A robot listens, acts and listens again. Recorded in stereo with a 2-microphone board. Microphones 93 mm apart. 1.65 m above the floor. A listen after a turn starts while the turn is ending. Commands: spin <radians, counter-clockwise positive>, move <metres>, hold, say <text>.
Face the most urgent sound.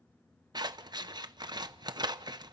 hold
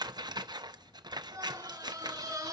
spin -0.61
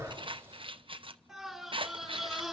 say Facing the scream, over 4 m away.